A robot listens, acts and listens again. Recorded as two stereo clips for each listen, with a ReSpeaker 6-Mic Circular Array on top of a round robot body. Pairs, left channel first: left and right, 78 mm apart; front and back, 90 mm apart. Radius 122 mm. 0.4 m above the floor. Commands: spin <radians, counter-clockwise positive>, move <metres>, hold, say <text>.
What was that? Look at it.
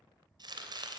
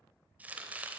spin -1.92
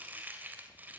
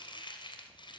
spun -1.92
spin -0.44
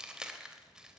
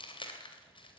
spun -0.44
spin -0.17
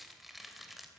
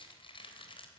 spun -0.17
say Found it: chopping, straight ahead.